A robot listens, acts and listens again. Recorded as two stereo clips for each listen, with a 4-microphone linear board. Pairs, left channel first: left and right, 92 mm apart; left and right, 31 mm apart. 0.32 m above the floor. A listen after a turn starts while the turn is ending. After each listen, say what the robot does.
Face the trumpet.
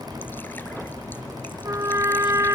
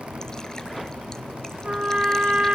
Turn 35° right.
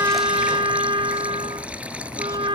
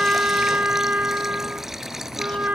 Turn 110° right.
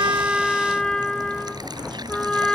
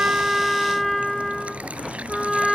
Facing the trumpet.